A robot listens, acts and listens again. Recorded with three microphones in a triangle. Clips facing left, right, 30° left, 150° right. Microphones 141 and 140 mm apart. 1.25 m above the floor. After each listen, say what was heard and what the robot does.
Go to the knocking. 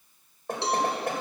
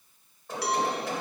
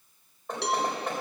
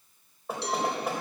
The knocking: 125° left. Turn 125° left.
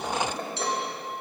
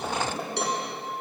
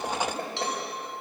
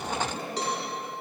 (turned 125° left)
The knocking is now 10° right. Turn 10° right.
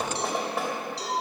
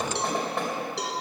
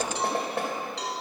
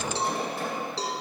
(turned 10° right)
Drive 1.0 m forward.
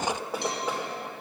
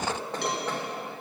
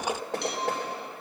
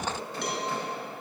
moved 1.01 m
The knocking is now 10° left. Turn 10° left.
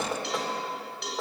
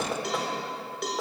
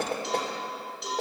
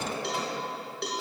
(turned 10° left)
Drive 1.0 m forward.
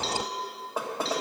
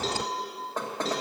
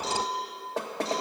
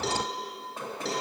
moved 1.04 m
The knocking is now 10° left. Turn 10° left.
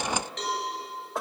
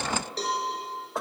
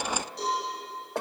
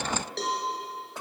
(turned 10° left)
Drive 1.0 m forward.
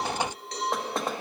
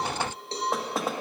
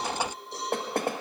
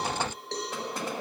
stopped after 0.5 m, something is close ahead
Arrived at the knocking, straight ahead.